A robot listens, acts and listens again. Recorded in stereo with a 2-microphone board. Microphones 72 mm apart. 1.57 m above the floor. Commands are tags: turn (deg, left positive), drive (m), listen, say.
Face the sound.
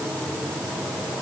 <listen/>
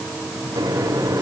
<turn deg="-90"/>
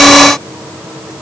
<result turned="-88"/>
<listen/>
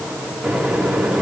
<say>Found it: a microwave, straight ahead.</say>